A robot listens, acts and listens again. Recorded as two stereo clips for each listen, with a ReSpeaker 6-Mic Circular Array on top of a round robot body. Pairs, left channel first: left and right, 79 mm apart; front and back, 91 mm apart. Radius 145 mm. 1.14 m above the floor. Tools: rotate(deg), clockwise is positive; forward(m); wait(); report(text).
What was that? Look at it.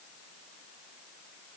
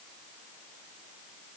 wait()
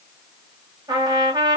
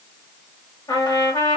rotate(50)
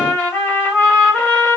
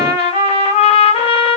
rotate(-20)
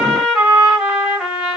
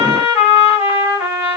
report("Found it: a trumpet, straight ahead.")